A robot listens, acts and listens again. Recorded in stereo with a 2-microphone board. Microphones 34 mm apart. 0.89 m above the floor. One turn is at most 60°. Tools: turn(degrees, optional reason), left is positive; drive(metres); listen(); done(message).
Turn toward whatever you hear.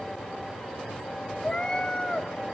turn(degrees=15, reason="The cat meowing: about 15° left or 165° left.")
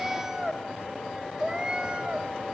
turn(degrees=-35, reason="So it is at 35° right.")
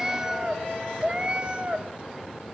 turn(degrees=-35, reason="The cat meowing is now 35° right.")
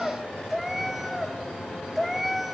done("Facing the cat meowing.")